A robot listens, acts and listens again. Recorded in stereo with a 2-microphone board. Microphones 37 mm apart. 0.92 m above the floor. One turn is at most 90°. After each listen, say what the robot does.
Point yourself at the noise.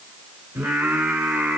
Turn 55° right.
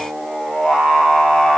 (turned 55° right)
Turn 15° left.
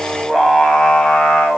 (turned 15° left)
Turn 35° left.
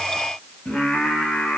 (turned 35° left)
Turn 40° left.
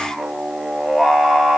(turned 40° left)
Facing the singing, 1 to 2 m away.